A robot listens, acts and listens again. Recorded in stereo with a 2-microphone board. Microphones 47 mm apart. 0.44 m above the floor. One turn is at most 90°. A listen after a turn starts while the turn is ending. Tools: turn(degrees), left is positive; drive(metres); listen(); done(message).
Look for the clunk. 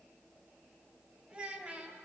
listen()
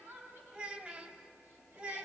listen()
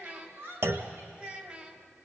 turn(degrees=-65)
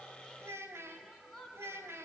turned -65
listen()
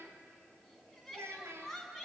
done("I heard a clunk, but can't make it out now. It was about straight ahead or 50° right.")